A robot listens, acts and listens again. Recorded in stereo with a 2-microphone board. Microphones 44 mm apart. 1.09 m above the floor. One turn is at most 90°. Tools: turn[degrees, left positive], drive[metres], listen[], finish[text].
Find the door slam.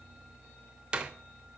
Thought: The door slam: about 20° right or 160° right.
Action: turn[-20]
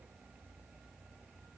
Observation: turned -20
Action: listen[]
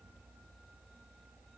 Action: finish[I heard a door slam, but can't make it out now. It was about straight ahead or 140° right.]